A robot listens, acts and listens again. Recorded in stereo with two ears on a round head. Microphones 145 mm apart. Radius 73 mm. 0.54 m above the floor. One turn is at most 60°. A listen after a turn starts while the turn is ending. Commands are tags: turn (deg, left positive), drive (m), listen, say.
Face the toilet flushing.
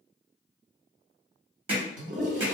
<turn deg="-60"/>
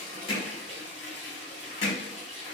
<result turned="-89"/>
<say>Found it: a toilet flushing, straight ahead.</say>